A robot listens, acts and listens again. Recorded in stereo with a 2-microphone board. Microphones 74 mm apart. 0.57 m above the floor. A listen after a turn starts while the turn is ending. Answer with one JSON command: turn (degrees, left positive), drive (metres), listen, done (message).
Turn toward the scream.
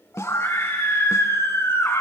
{"turn": 40}
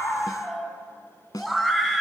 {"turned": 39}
{"done": "Found it: a scream, straight ahead, over 4 m away."}